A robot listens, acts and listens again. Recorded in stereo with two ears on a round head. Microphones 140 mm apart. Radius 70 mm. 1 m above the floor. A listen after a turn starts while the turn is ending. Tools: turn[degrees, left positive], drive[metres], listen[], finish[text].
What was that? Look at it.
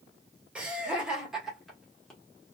Action: turn[30]
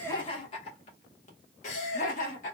Thought: So it is at 125° left.
Action: turn[125]
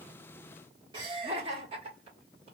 Thought: The laughter is now 40° right.
Action: turn[-40]
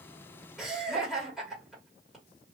Action: finish[Found it: laughter, straight ahead.]